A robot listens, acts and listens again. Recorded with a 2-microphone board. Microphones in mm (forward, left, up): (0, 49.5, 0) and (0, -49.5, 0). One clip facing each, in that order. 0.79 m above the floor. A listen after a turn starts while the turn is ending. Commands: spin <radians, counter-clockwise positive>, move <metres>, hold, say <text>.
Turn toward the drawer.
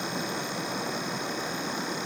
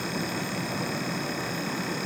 hold
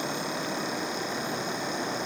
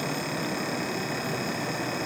hold
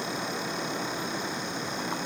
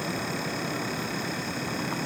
say I can't make out a drawer to turn to.